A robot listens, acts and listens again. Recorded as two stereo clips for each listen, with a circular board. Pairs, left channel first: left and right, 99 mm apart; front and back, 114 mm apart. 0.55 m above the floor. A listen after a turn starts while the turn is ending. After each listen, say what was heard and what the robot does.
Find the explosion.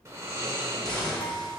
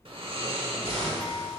The explosion: 170° left. Turn 170° left.
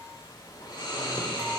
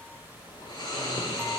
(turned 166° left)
Facing where the explosion came from. I can't hear it now.